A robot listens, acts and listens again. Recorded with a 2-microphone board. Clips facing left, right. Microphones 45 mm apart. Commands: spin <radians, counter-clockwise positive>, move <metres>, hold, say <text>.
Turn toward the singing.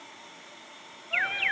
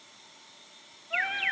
spin 0.52
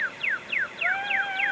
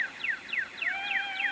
spin 2.18
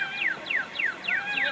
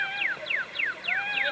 spin -0.35
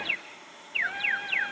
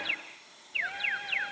say Facing the singing, 2 to 4 m away.